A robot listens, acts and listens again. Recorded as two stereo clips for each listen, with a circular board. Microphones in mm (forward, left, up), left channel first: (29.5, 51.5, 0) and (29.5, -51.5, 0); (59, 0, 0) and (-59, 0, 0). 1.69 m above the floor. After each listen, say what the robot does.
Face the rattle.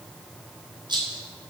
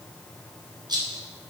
Turn 130° right.
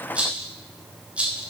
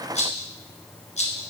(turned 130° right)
Turn 10° right.
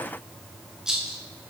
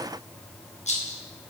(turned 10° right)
Facing the rattle.